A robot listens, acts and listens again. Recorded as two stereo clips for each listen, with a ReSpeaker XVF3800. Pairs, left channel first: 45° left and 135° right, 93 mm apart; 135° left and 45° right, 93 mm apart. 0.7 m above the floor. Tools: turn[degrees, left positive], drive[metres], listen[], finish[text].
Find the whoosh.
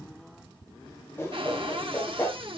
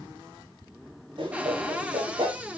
Thought: The whoosh: 20° right.
Action: turn[-20]
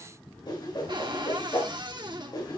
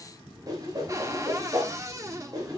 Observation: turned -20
Action: finish[Found it: a whoosh, straight ahead.]